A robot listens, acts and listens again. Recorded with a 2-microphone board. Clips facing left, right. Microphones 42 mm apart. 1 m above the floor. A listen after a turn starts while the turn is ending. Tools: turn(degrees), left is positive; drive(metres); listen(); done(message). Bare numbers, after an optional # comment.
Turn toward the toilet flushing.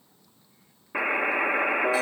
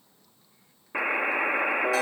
listen()
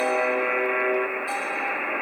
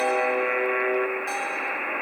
listen()
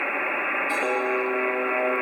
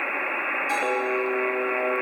done("I can't make out a toilet flushing, only a buzzer.")